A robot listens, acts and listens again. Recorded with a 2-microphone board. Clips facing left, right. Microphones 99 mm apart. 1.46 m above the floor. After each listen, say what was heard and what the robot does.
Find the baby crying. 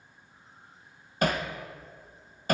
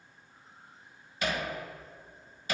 Keep listening.
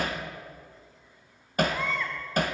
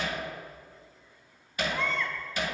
Turn 30° left.
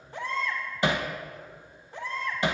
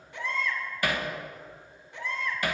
So it is at 145° left. Turn 145° left.
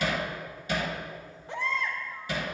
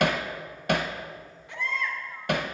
The baby crying is now 35° left. Turn 35° left.
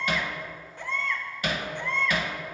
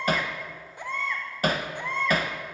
The baby crying is now 15° right. Turn 15° right.
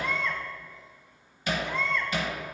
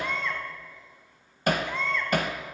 Facing the baby crying.